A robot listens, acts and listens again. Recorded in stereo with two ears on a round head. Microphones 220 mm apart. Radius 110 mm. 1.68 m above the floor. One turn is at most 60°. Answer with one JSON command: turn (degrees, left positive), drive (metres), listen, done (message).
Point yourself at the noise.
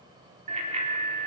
{"turn": -30}
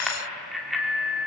{"done": "Facing the bicycle bell."}